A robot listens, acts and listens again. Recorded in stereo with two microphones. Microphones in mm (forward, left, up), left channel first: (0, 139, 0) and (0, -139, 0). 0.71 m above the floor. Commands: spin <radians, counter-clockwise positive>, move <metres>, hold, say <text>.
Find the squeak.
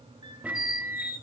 spin -1.57
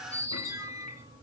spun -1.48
spin -0.17
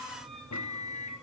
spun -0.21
hold
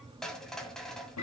say Facing the squeak, 1 to 2 m away.